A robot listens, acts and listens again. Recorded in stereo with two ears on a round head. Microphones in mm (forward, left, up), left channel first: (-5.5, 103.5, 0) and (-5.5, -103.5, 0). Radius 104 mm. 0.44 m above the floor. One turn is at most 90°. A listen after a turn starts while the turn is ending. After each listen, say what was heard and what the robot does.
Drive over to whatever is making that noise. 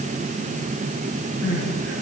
The crying: about 60° right or 120° right. Turn 60° right.
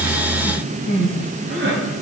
So it is at 55° right. Turn 55° right.
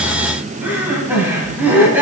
The crying is now 10° right. Turn 10° right.
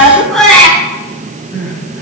Drive 1.0 m forward.
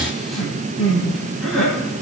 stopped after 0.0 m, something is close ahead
Something is in my way. I am facing the crying but have not reached it.